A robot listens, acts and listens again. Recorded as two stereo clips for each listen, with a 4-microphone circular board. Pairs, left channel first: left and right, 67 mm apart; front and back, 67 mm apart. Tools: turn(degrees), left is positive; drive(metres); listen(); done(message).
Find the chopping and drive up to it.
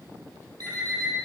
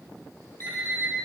listen()
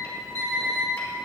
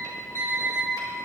listen()
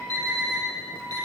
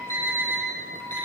done("I can't make out chopping, only an alarm clock.")